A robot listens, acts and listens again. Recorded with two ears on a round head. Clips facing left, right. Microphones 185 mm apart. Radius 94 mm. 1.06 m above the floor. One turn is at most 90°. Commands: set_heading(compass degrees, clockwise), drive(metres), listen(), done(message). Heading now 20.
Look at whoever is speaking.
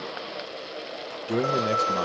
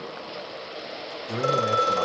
set_heading(350)
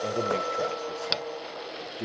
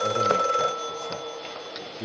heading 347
done("Facing the man speaking.")